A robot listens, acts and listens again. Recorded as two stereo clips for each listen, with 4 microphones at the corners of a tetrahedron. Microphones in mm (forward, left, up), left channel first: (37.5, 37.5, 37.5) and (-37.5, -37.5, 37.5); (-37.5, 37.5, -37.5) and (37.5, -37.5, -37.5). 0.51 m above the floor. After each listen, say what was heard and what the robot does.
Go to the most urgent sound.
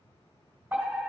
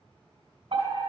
The fire alarm: 60° right. Turn 60° right.
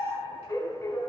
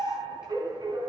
Drive 1.0 m forward.
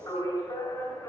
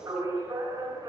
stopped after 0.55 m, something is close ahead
Blocked. The fire alarm is further on, straight ahead.